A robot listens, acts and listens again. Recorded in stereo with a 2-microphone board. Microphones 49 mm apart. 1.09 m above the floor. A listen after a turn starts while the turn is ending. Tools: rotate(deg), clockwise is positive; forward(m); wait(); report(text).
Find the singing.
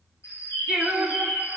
rotate(30)
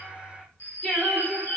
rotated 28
rotate(-25)
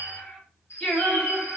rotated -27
rotate(-30)
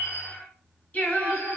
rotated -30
rotate(-40)
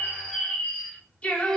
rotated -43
rotate(-30)
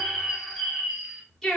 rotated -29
report("Facing the singing, 1 to 2 m away.")